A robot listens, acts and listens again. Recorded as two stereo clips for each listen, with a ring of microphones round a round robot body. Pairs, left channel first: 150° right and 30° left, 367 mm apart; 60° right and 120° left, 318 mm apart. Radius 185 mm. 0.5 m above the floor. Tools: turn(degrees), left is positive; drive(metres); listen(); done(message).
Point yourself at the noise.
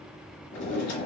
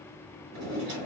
turn(degrees=160)
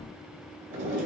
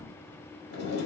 turn(degrees=-15)
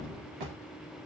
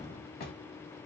done("Facing the drawer.")